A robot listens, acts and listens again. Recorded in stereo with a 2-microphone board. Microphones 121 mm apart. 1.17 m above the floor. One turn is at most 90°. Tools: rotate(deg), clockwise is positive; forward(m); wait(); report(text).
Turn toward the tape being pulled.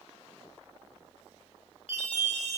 wait()
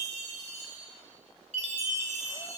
wait()
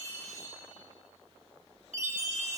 report("I can't make out tape being pulled to turn to.")